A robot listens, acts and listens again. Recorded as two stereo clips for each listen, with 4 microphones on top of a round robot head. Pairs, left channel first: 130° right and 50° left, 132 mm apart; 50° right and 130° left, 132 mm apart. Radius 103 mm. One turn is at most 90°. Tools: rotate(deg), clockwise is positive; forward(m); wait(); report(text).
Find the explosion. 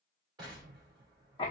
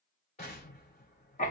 rotate(10)
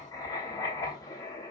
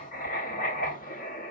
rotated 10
report("Facing where the explosion came from. I can't hear it now.")